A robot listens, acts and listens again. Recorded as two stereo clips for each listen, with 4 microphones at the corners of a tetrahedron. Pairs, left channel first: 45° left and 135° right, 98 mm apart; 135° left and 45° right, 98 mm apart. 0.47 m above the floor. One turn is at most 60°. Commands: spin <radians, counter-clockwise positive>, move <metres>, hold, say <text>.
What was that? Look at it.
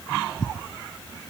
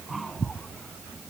hold
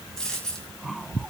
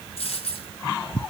spin 1.05
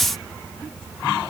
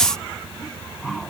spin 1.05
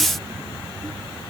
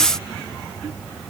spin 0.17
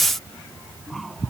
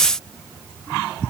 say I heard a dropped coin from this way, but can't make it out now.